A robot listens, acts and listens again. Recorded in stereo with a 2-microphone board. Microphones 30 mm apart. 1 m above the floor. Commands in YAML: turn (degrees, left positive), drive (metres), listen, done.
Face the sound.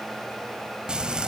turn: -30
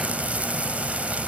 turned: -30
turn: -120
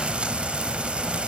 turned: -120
turn: -45
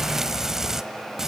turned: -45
turn: -15
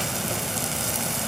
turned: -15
done: "Found it: frying, straight ahead, 1 to 2 m away."